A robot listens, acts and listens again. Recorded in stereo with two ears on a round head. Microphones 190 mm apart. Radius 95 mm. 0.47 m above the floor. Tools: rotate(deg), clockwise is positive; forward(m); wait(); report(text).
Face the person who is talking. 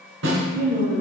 rotate(50)
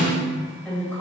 rotate(-10)
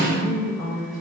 rotate(-15)
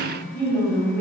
rotate(-15)
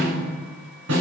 wait()
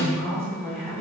report("Found it: a woman speaking, straight ahead, 2 to 4 m away.")